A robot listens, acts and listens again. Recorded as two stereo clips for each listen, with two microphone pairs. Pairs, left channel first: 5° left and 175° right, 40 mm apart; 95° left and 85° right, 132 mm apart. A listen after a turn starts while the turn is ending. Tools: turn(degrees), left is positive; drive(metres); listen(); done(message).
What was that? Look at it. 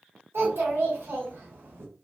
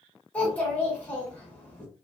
turn(degrees=175)
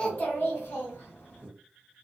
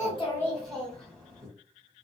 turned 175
turn(degrees=10)
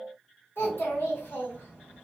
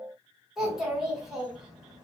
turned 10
done("Facing the child speaking, 1 to 2 m away.")